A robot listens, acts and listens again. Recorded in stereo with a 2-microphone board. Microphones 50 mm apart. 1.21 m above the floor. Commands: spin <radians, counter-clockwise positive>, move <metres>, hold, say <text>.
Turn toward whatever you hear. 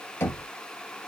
spin 0.87
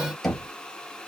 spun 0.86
say Facing the knocking.